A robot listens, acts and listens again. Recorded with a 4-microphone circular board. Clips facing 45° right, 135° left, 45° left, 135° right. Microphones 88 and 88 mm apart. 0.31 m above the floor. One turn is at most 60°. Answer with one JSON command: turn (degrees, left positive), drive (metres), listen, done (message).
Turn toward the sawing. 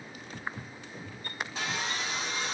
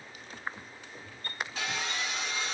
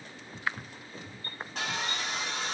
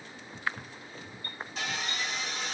{"turn": 20}
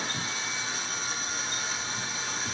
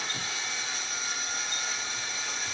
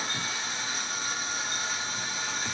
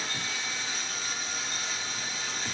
{"done": "Found it: sawing, straight ahead, 1 to 2 m away."}